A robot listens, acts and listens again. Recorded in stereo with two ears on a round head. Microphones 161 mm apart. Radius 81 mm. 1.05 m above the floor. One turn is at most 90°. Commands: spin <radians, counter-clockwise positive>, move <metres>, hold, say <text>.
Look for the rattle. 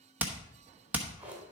hold
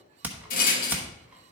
spin 0.87
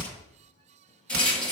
say Found it: a rattle, straight ahead.